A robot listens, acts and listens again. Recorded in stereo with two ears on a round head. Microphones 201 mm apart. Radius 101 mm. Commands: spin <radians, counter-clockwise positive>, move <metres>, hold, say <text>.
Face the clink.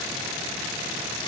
hold
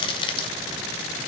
hold
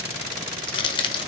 say I can't make out a clink, only crushing.